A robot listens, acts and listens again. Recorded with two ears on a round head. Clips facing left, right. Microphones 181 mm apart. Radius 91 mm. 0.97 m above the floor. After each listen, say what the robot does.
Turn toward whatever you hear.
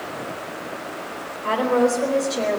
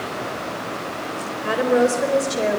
Turn 30° right.
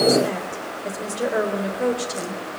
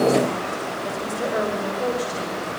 Turn 30° left.
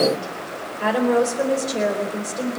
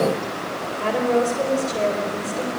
Turn 15° left.
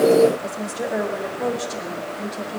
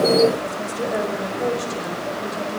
Facing the woman speaking.